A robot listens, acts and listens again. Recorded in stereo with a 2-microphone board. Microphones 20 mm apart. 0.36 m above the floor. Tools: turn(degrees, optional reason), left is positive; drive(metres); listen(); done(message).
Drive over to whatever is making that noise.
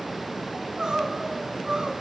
turn(degrees=-35, reason="The crying: about 35° right or 145° right.")
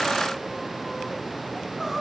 listen()
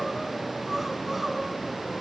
listen()
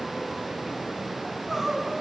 drive(metres=1.0)
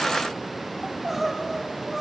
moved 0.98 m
drive(metres=1.0)
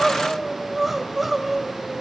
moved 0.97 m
drive(metres=1.0)
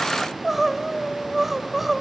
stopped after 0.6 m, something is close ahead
turn(degrees=-10, reason="The crying is now 10° right.")
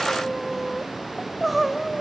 done("I am next to the crying.")